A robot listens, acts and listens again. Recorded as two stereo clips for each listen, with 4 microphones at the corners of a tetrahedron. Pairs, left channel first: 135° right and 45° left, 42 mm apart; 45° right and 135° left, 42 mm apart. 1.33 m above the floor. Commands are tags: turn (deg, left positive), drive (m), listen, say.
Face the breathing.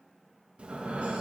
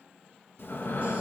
<turn deg="-15"/>
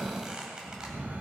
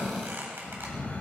<say>Found it: breathing, straight ahead.</say>